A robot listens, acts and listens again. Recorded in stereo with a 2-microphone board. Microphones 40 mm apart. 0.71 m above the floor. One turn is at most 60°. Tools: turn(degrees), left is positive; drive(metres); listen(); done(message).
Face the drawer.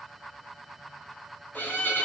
listen()
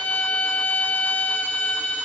listen()
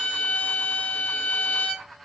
done("I can't make out a drawer, only a violin.")